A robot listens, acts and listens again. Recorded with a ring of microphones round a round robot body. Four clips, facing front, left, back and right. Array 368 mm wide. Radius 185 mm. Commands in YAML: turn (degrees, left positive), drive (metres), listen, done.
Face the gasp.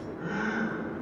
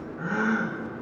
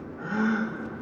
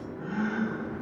turn: 105
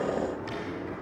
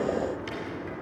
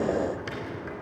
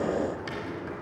done: "I heard a gasp from this way, but can't make it out now."